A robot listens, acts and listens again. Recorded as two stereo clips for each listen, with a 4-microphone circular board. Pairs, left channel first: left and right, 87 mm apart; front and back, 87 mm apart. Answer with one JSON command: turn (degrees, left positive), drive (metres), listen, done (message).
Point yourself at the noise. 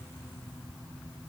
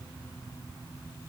{"listen": true}
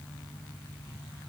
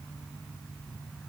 {"listen": true}
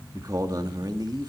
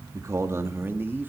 {"turn": -115}
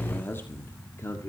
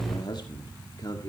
{"turn": 35}
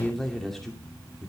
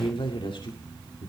{"done": "Facing the man speaking, 2 to 4 m away."}